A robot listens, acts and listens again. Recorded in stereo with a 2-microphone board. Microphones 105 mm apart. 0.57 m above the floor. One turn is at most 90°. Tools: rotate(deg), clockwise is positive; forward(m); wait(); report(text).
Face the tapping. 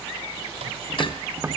rotate(20)
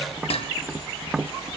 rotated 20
report("Found it: tapping, straight ahead, 1 to 2 m away.")